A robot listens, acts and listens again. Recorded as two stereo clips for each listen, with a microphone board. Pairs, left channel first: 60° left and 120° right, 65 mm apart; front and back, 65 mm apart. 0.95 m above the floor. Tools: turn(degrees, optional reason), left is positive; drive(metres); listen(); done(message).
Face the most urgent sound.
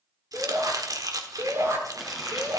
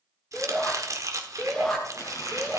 turn(degrees=-85, reason="The shout: 85° right.")
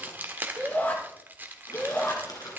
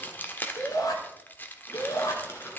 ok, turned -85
done("Found it: a shout, straight ahead, 2 to 4 m away.")